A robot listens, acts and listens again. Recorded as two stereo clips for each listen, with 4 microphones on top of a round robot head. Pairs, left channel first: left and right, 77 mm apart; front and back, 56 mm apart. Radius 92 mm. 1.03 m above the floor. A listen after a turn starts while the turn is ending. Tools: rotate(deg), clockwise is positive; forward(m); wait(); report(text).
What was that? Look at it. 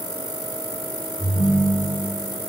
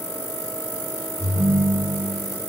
rotate(-160)
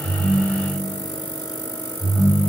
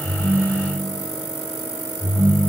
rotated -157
report("Found it: a ringtone, straight ahead, over 4 m away.")